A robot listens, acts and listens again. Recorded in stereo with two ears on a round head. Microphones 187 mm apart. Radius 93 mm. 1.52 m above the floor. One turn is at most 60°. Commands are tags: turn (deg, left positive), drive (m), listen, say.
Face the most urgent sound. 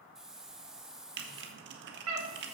<turn deg="-60"/>
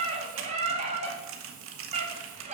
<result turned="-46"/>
<turn deg="-35"/>
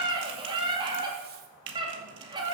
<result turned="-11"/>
<turn deg="-25"/>
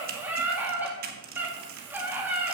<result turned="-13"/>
<turn deg="-10"/>
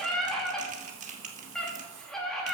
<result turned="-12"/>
<say>Facing the scream.</say>